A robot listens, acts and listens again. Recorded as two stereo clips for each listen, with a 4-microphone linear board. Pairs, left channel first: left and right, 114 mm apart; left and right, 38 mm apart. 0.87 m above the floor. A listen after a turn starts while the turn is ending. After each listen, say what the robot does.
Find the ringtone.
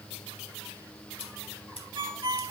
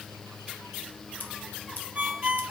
Turn 45° right.
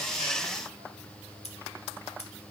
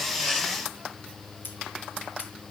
Keep listening.
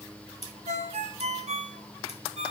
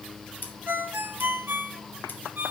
Turn 90° right.
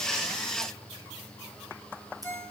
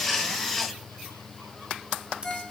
Turn 20° left.
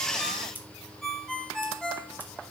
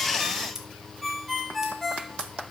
Facing the ringtone, 1 to 2 m away.